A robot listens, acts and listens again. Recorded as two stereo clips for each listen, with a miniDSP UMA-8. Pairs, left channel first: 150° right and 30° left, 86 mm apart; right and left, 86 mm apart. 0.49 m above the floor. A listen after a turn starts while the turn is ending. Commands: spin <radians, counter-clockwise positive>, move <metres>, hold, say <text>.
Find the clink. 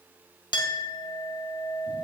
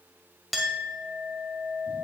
spin 3.14
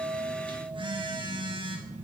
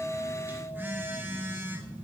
hold
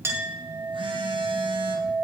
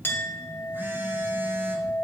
spin -0.44
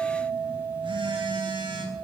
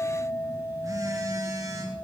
spin -0.17
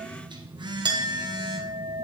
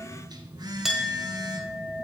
say Facing the clink.